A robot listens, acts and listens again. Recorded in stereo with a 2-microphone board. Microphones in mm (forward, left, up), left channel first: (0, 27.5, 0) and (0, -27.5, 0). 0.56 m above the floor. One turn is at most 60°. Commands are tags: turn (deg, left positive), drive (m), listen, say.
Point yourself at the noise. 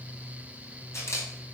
<turn deg="60"/>
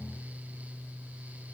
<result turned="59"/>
<listen/>
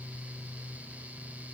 <listen/>
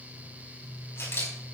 <turn deg="55"/>
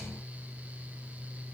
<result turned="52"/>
<listen/>
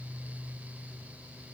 <listen/>
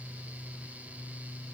<say>Facing where the camera shutter came from. I can't hear it now.</say>